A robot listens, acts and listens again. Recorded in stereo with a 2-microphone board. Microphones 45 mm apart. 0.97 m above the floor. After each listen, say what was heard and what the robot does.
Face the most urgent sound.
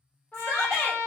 The shout: about 65° left or 115° left. Turn 65° left.
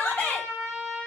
So it is at 40° left. Turn 40° left.
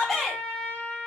Found it: a shout, straight ahead, 1 to 2 m away.